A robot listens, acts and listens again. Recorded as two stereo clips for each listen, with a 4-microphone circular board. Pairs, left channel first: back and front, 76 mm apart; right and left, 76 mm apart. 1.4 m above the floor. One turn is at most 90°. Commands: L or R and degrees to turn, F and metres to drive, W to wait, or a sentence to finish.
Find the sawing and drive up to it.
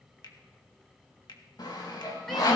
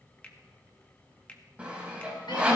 L90
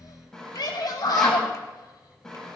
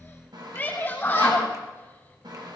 L90
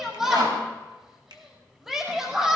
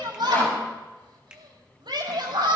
L10
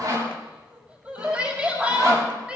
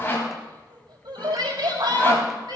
R30
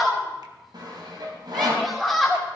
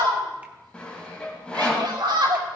R15
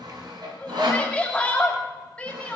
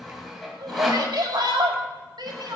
F1.0
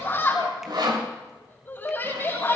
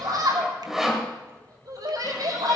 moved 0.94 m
F1.0
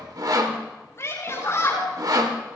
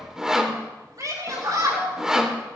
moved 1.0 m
L10
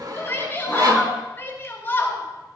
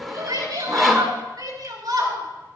F1.0
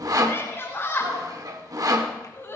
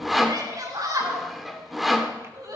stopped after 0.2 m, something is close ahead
I am next to the sawing.